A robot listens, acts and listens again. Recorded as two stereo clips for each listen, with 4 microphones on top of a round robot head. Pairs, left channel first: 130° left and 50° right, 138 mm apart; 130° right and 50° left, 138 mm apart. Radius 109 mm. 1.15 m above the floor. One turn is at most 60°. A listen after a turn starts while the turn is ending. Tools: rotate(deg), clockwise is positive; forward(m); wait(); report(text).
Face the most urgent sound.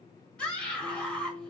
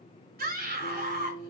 rotate(-50)
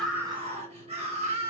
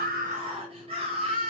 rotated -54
report("Facing the scream.")